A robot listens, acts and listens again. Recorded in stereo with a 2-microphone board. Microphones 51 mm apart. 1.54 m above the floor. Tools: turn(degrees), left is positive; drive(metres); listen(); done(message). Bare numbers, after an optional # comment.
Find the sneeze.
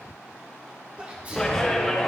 # The sneeze: about 25° right or 155° right.
turn(-25)
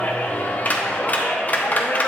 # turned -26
listen()
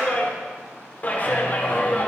done("I heard a sneeze, but can't make it out now. It was about straight ahead or 125° right.")